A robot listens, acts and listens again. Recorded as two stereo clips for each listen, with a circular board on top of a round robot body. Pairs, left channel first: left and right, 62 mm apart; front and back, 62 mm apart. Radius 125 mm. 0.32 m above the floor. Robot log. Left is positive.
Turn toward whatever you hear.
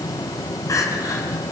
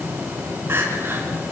note: The crying: 125° left.
cmd yaw +125
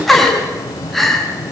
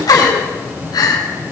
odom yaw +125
end: Found it: crying, straight ahead.